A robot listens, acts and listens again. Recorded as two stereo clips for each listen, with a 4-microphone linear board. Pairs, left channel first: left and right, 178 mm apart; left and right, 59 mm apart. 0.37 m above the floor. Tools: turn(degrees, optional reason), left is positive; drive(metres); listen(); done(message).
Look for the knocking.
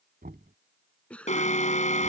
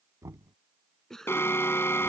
turn(degrees=-60, reason="The knocking: about 60° right or 120° right.")
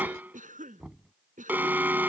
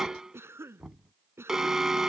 done("Found it: knocking, straight ahead.")